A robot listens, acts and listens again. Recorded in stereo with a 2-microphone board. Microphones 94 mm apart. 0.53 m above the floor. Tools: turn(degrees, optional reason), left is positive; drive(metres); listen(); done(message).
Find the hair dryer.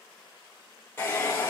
turn(degrees=25, reason="The hair dryer: about 25° left or 155° left.")
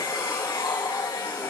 turn(degrees=130, reason="So it is at 130° left.")
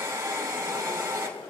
turn(degrees=-30, reason="The hair dryer is now 30° right.")
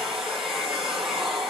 done("Facing the hair dryer.")